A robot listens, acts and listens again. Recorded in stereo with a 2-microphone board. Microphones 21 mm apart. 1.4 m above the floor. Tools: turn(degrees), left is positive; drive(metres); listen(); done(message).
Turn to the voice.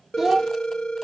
turn(degrees=-25)
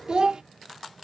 turn(degrees=-125)
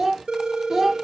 turn(degrees=-25)
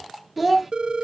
turn(degrees=-15)
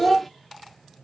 done("Facing the child speaking, under 1 m away.")